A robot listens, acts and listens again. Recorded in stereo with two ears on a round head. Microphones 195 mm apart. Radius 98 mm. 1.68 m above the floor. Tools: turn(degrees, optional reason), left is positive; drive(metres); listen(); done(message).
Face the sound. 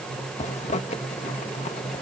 turn(degrees=30, reason="The zipper: about 30° left or 150° left.")
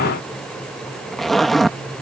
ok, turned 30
done("Facing the zipper.")